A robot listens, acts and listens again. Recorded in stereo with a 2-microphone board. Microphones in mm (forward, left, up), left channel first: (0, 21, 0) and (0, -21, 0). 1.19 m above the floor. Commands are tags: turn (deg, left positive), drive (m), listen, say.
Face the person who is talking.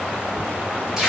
<listen/>
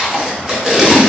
<listen/>
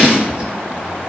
<say>I can't make out anyone speaking to turn to.</say>